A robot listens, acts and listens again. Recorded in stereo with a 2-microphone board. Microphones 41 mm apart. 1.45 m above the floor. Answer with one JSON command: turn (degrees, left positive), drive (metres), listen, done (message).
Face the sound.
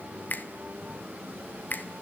{"turn": 50}
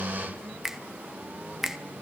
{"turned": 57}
{"turn": -10}
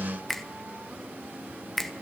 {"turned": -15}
{"done": "Facing the finger snap, 1 to 2 m away."}